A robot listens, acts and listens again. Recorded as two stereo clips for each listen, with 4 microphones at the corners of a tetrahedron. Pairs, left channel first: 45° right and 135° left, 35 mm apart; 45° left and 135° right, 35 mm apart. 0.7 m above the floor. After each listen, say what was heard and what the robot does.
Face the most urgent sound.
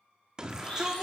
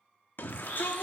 The shout: 65° left. Turn 65° left.
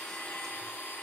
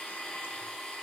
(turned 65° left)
Keep listening.
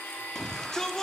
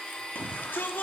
The shout is now 25° left. Turn 25° left.
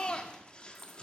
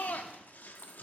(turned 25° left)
The shout is now 10° left. Turn 10° left.
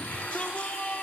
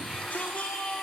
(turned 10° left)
Facing the shout.